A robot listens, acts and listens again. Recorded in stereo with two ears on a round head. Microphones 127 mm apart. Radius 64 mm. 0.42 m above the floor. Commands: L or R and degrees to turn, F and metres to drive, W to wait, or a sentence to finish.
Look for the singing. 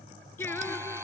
L30
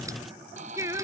R20
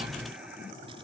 W
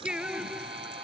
Facing the singing.